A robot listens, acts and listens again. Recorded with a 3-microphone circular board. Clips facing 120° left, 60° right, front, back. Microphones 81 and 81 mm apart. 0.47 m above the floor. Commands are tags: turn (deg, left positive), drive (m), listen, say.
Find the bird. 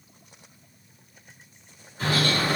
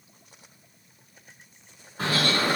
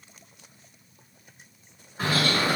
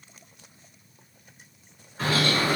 <turn deg="-75"/>
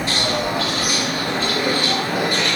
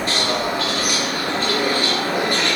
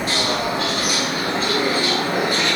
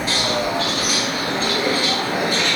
<turn deg="-25"/>
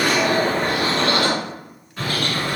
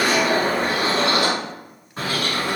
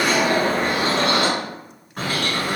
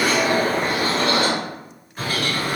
<say>Facing the bird, 1 to 2 m away.</say>